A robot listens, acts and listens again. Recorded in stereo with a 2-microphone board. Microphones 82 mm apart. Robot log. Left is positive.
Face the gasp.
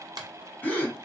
note: The gasp: about 20° left or 160° left.
cmd yaw +20
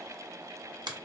cmd idle
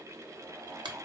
end: I heard a gasp, but can't make it out now. It was about straight ahead or 140° left.